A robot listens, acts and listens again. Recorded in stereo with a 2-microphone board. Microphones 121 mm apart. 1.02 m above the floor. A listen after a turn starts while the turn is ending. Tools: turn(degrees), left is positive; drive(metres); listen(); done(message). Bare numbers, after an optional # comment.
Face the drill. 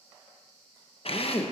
# The drill: about 55° left or 125° left.
turn(55)
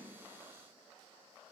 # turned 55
listen()
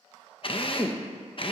# So it is at 55° left.
turn(55)
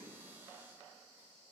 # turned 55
listen()
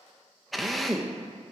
done("Facing the drill, under 1 m away.")